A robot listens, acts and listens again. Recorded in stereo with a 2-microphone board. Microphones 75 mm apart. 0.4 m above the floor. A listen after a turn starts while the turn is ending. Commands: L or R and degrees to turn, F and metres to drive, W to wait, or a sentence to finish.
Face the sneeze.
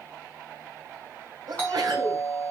R70
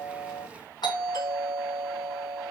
W
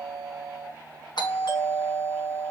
I heard a sneeze, but can't make it out now. It was about straight ahead or 40° right.